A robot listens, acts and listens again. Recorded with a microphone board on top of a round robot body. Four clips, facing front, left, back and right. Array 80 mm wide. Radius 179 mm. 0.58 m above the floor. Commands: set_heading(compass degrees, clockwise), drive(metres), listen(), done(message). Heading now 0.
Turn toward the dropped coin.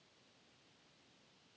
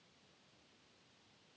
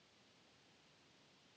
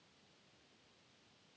listen()
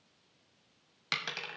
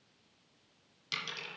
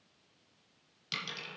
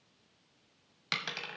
set_heading(40)
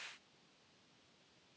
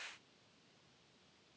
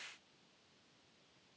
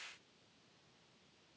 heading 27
set_heading(42)
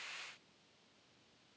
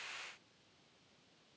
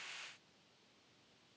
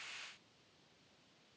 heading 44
done("I heard a dropped coin from this way, but can't make it out now.")